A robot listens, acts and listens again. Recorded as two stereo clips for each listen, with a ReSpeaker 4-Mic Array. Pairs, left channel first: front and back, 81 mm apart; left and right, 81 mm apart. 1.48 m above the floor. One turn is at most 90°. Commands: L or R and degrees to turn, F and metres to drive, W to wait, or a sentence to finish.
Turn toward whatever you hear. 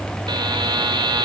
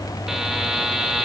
R90
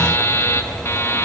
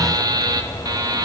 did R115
R60
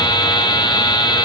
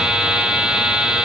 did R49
R10
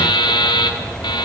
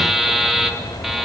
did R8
Found it: a buzzer, straight ahead, 2 to 4 m away.